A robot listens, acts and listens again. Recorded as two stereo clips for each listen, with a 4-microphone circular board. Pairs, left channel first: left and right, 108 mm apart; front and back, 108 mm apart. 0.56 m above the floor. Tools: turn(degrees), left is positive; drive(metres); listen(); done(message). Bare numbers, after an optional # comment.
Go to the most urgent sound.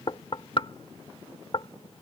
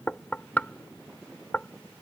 listen()
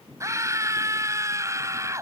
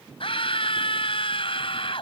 # The scream: 30° right.
turn(-30)
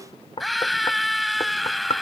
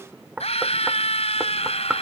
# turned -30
drive(1.0)
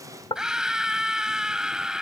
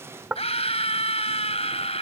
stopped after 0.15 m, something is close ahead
done("Something is in my way. I am facing the scream but have not reached it.")